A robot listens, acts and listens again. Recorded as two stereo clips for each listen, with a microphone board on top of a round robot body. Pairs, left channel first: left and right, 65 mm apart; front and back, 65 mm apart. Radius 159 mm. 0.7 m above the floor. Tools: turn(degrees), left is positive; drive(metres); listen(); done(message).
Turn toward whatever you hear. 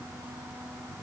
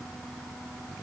listen()
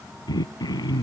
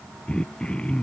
turn(degrees=75)
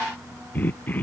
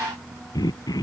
turn(degrees=25)
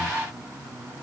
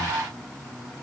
listen()
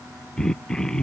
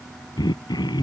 turn(degrees=10)
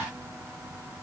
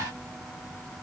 listen()
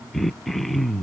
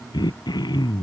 done("Found it: throat clearing, straight ahead.")